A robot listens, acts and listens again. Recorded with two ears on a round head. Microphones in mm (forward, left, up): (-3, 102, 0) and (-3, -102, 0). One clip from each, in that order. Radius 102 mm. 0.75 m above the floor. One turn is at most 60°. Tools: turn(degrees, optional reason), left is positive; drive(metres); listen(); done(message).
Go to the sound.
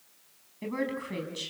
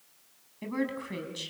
turn(degrees=-30)
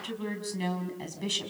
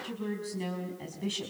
turn(degrees=25, reason="So it is at 25° left.")
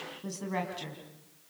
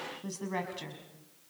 drive(metres=1.0)
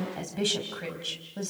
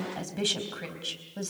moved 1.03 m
drive(metres=1.0)
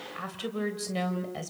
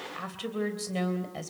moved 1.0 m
drive(metres=1.0)
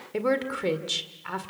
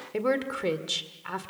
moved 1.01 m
drive(metres=1.0)
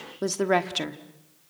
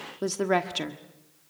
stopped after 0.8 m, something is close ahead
done("I am next to the woman speaking.")